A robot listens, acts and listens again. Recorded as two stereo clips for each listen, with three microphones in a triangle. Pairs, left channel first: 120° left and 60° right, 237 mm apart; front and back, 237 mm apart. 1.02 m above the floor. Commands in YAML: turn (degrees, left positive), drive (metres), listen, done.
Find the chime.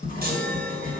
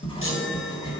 turn: -15
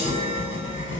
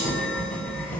done: "Found it: a chime, straight ahead, 1 to 2 m away."